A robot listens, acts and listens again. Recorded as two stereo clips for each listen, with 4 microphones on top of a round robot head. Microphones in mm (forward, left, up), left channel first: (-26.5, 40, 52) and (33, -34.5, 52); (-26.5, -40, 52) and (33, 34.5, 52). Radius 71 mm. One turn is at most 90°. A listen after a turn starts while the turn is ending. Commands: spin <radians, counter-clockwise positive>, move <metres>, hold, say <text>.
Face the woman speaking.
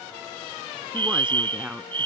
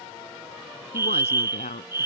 spin -1.57
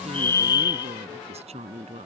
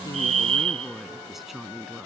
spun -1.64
spin -0.61
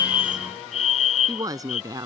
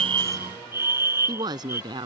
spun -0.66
say Facing the woman speaking.